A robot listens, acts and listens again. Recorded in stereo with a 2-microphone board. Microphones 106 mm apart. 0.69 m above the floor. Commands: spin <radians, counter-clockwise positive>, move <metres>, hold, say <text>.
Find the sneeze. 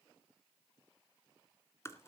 hold
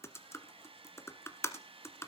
hold
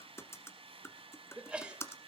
spin -0.52
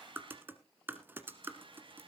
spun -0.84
hold
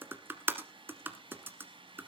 say I heard a sneeze, but can't make it out now. It was about 40° left or 125° right.